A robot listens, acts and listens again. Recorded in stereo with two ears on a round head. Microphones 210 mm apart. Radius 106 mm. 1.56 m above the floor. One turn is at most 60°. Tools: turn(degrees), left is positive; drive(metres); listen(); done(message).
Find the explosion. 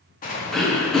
turn(degrees=35)
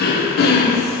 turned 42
listen()
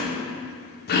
done("I heard an explosion, but can't make it out now. It was about 5° right or 100° left.")